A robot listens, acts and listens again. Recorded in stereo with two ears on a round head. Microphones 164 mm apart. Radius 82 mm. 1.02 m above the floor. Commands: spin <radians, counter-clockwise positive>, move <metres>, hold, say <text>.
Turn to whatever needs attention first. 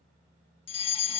spin 0.52
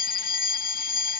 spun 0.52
spin 2.01
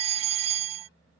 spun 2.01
spin -0.70
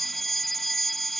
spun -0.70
say Found it: a fire alarm, straight ahead.